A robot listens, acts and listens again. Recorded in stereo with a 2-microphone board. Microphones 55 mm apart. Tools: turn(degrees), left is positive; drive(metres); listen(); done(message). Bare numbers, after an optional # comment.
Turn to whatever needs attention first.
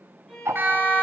# The siren: about 45° right or 135° right.
turn(-45)
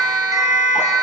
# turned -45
# So it is at 85° right.
turn(-85)
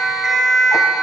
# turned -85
done("Facing the siren.")